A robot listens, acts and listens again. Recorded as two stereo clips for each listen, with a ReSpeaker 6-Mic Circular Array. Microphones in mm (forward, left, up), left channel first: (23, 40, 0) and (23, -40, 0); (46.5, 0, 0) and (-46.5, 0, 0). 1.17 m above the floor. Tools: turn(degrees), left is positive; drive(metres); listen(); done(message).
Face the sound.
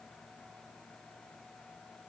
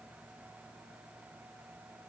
listen()
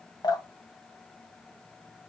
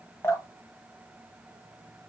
turn(degrees=65)
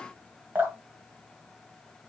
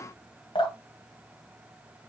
turn(degrees=-20)
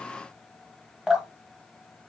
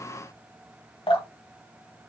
done("Found it: dripping, straight ahead, 1 to 2 m away.")